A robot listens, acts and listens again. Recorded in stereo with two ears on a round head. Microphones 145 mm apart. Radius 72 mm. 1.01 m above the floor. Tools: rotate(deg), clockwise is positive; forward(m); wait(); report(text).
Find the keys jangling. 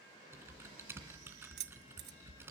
rotate(70)
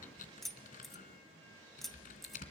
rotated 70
report("Facing the keys jangling.")